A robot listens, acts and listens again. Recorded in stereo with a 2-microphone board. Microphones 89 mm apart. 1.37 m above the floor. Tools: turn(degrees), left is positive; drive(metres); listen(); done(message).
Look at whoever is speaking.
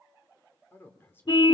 turn(degrees=25)
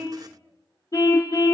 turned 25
listen()
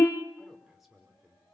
done("Found it: a man speaking, straight ahead, over 4 m away.")